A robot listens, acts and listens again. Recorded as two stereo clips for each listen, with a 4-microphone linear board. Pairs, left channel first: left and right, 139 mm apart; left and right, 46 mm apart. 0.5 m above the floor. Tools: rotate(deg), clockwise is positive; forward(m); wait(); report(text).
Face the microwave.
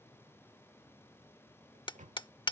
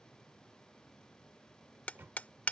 rotate(60)
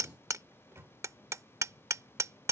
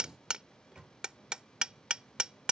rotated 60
rotate(20)
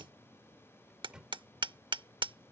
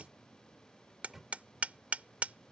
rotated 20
report("Found it: a microwave, straight ahead.")